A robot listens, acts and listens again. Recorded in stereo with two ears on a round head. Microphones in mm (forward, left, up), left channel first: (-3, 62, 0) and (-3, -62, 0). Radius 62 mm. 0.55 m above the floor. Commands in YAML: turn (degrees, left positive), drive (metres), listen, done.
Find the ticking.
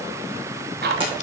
turn: -75
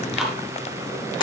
done: "Facing the ticking, 2 to 4 m away."